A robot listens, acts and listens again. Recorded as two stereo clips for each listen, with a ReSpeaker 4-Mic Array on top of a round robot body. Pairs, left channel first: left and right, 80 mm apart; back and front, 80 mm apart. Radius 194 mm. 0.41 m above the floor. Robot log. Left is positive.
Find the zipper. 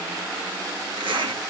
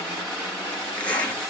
note: The zipper: 110° right.
cmd yaw -110
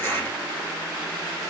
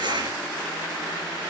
note: The zipper is now 25° left.
cmd yaw +25
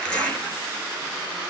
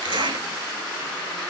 note: The zipper is now 10° left.
cmd yaw +10
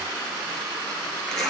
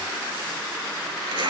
end: Found it: a zipper, straight ahead.